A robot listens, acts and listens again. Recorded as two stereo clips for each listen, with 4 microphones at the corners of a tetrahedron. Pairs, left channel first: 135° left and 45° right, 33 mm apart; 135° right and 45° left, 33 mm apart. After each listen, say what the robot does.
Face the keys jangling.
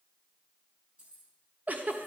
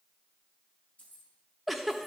Turn 95° right.
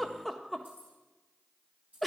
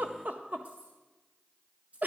Facing the keys jangling, over 4 m away.